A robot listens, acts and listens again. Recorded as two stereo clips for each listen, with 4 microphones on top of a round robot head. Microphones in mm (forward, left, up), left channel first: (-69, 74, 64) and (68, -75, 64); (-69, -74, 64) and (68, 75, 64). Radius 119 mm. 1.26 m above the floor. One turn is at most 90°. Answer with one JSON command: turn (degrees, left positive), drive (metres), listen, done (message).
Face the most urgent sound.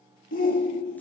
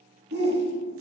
{"turn": 85}
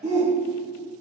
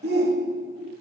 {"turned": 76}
{"turn": 10}
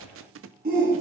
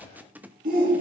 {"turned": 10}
{"done": "Found it: a shout, straight ahead."}